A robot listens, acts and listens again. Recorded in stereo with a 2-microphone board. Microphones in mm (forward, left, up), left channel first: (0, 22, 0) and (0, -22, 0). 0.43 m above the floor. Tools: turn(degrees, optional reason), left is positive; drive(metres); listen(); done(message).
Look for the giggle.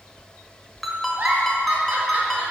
turn(degrees=-30, reason="The giggle: about 30° right or 150° right.")
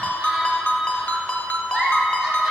done("Facing the giggle, 1 to 2 m away.")